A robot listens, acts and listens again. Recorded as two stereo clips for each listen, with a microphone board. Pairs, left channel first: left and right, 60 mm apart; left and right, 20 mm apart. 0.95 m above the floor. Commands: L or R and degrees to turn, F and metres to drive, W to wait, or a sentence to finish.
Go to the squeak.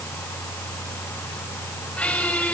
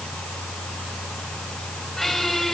L20
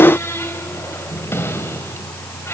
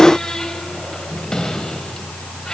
L140
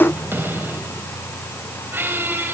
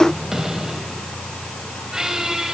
R35
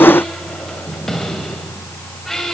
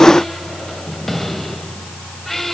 F1.0
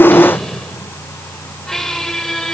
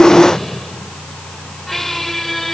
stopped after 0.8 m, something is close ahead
L10
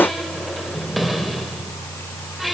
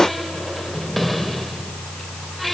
Something is in my way. I am facing the squeak but have not reached it.